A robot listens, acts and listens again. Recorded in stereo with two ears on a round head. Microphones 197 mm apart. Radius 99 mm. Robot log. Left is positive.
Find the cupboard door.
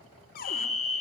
note: The cupboard door: about 40° left or 140° left.
cmd yaw +40
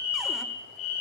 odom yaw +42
cmd idle
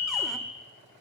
cmd idle
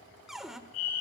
end: Found it: a cupboard door, straight ahead, 1 to 2 m away.